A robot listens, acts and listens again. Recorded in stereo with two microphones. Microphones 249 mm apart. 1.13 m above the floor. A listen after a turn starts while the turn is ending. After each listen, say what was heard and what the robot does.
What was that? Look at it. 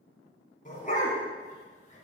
The dog barking: about 30° left or 150° left. Turn 30° left.
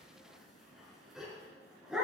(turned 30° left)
Found it: a dog barking, straight ahead.